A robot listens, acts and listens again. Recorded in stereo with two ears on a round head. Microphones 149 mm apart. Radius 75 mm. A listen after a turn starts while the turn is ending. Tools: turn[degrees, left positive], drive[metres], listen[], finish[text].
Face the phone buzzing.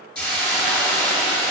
Action: listen[]
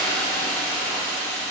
Action: listen[]
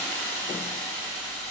Action: finish[I can't make out a phone buzzing to turn to.]